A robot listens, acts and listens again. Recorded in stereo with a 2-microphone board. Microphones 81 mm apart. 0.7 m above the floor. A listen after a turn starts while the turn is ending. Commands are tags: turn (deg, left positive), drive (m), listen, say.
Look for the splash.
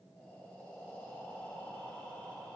<listen/>
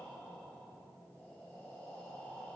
<listen/>
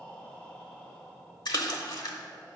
<turn deg="60"/>
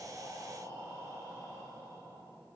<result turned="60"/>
<listen/>
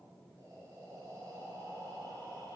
<say>I heard a splash, but can't make it out now. It was about straight ahead or 60° left.</say>